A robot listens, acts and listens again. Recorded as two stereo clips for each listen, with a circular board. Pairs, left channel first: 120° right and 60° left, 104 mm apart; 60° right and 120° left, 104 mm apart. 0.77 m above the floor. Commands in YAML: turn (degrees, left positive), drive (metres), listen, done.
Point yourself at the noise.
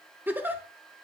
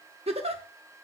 turn: 130
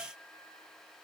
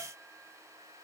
listen: true
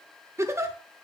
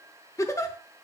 done: "Found it: a giggle, straight ahead, under 1 m away."